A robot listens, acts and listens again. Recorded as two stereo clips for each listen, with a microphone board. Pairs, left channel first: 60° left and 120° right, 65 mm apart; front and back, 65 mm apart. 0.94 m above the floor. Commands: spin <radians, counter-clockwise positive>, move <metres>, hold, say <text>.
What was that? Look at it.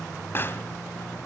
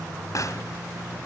spin 0.26
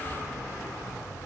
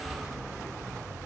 say Facing where the pop came from. I can't hear it now.